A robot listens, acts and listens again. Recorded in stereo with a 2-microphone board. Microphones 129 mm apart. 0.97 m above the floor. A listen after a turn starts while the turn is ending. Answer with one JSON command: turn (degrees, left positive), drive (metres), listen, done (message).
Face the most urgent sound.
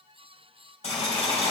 {"listen": true}
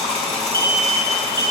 {"turn": -35}
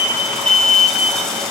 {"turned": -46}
{"turn": 10}
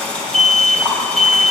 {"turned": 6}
{"done": "Facing the alarm."}